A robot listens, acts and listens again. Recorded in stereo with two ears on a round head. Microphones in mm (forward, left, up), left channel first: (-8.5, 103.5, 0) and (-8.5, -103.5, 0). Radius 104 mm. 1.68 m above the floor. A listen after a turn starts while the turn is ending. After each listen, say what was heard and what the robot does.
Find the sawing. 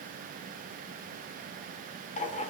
Keep listening.
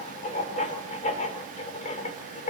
Keep listening.
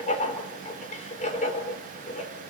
I can't make out sawing, only writing.